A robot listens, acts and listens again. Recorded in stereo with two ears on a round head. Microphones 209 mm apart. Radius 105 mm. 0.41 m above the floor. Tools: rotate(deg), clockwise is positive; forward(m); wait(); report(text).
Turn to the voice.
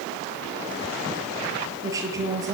rotate(30)
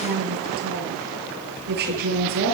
rotate(135)
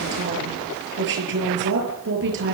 rotate(55)
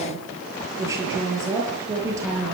rotate(15)
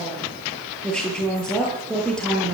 report("Found it: a woman speaking, straight ahead.")